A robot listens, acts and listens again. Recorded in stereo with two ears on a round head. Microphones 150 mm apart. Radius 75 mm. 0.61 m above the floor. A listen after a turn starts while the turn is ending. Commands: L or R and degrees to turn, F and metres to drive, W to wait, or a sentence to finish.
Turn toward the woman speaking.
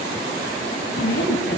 L60
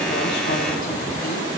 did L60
W
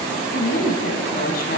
L60
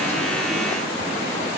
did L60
W
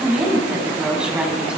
Facing the woman speaking.